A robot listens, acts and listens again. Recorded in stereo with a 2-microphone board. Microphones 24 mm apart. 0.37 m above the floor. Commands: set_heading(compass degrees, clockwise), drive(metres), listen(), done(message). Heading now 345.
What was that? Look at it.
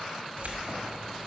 set_heading(45)
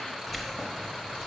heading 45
set_heading(25)
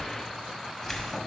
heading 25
set_heading(0)
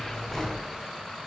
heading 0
set_heading(335)
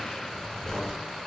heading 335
set_heading(315)
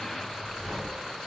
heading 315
done("Facing the keys jangling.")